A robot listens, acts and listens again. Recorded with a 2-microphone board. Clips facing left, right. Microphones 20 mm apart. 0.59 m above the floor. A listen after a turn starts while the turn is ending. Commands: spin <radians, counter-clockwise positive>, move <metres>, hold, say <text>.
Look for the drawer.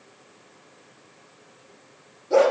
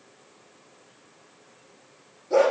hold
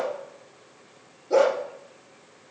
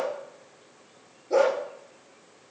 hold
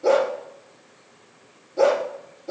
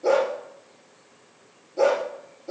say I can't make out a drawer, only a dog barking.